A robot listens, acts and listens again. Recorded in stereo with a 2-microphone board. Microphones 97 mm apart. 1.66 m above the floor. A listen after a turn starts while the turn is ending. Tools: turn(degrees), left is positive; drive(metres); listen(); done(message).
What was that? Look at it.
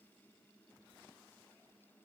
listen()
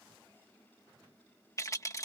turn(degrees=35)
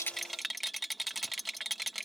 done("Facing the rattle.")